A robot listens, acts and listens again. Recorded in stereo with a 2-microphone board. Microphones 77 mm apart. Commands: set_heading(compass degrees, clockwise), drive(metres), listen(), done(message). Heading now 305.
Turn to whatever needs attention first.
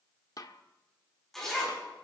listen()
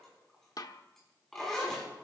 listen()
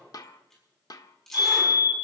set_heading(240)
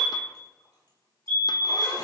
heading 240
set_heading(215)
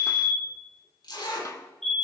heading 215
done("Facing the fire alarm, 2 to 4 m away.")